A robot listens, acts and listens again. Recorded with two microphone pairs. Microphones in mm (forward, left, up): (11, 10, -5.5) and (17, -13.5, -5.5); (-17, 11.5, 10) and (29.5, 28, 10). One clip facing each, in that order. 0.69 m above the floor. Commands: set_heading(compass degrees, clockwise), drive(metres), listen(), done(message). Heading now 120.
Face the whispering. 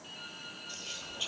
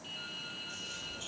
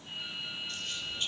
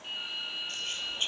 set_heading(50)
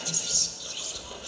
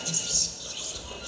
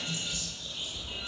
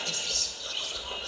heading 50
set_heading(30)
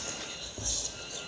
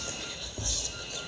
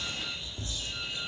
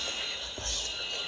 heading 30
done("Found it: whispering, straight ahead, 2 to 4 m away.")